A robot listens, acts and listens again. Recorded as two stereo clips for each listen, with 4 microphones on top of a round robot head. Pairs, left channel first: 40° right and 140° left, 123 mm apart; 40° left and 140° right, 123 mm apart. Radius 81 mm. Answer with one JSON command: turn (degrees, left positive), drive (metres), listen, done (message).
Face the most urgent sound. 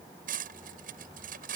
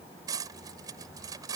{"listen": true}
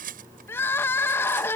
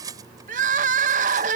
{"turn": -115}
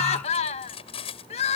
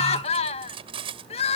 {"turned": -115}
{"done": "Found it: crying, straight ahead."}